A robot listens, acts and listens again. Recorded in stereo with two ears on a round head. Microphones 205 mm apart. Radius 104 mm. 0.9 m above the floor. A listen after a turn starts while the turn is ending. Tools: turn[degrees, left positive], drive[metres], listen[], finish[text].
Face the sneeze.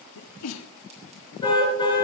Action: turn[90]
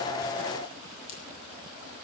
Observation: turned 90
Action: finish[I heard a sneeze from this way, but can't make it out now.]